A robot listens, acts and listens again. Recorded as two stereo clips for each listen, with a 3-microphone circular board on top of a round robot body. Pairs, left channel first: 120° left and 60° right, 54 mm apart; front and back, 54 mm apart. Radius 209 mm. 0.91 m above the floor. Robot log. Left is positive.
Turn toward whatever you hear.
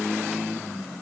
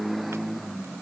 cmd idle
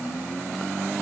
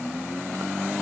cmd idle
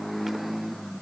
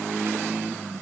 end: I can't make out anything to turn to.